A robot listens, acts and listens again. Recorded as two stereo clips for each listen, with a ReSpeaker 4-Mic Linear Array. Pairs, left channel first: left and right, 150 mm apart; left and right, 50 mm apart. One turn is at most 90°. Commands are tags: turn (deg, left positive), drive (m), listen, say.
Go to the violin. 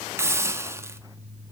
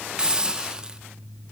<listen/>
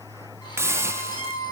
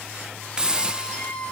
<turn deg="30"/>
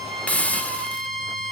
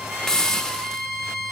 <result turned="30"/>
<drive m="1.0"/>
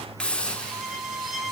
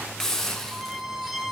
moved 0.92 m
<drive m="1.0"/>
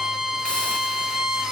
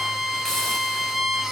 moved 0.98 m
<drive m="1.0"/>
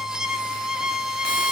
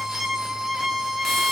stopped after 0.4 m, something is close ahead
<say>Arrived at the violin, straight ahead.</say>